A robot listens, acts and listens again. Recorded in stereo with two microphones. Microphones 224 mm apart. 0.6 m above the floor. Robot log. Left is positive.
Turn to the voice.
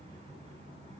cmd idle
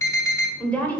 cmd yaw +30
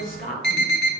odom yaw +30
note: So it is at 140° left.
cmd yaw +140
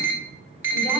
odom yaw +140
cmd idle
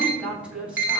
end: Facing the woman speaking.